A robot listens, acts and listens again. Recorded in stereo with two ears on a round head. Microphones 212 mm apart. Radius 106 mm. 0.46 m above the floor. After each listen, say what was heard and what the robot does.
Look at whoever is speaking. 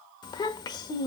The child speaking: about 20° left or 160° left. Turn 20° left.
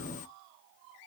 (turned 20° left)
Keep listening.
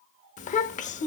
So it is at 140° left. Turn 140° left.
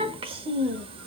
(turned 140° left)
The child speaking is now 25° right. Turn 25° right.
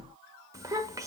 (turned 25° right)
The child speaking is now 15° right. Turn 15° right.
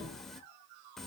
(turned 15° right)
Found it: a child speaking, straight ahead, under 1 m away.